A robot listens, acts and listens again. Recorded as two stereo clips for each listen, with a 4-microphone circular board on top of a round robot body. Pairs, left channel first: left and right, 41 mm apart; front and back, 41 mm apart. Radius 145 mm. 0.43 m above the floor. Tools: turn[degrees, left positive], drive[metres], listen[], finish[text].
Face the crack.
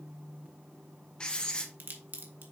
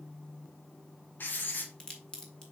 Thought: The crack: 70° right.
Action: turn[-70]
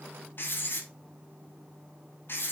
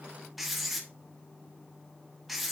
Action: finish[I heard a crack from this way, but can't make it out now.]